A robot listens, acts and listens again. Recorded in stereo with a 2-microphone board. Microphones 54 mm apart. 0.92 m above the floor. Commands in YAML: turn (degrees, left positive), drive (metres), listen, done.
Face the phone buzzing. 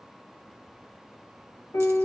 listen: true
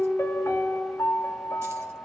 listen: true
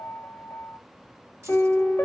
done: "I can't make out a phone buzzing to turn to."